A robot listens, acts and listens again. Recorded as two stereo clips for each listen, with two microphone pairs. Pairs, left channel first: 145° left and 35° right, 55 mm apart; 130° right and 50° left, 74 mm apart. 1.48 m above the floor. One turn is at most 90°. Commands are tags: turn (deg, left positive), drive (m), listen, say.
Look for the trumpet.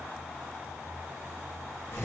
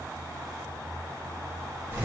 <listen/>
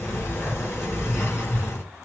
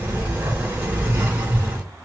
<listen/>
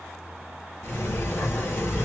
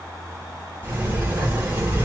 <say>I can't make out a trumpet, only a sliding door.</say>